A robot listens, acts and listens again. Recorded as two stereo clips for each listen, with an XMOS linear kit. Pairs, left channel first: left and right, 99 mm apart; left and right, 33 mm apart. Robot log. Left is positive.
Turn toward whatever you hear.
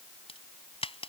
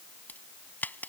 note: The crack: about 70° left or 110° left.
cmd yaw +70
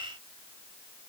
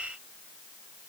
cmd idle
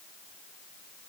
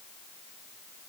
end: I heard a crack, but can't make it out now. It was about straight ahead or 40° left.